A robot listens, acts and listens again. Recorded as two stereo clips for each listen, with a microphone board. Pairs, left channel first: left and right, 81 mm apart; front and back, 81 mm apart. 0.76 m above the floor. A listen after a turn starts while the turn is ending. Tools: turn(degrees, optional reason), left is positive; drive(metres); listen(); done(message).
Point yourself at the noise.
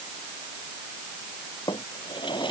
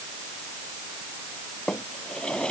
turn(degrees=80, reason="The drawer: 80° left.")
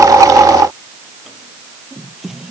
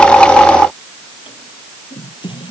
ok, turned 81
done("Found it: a drawer, straight ahead.")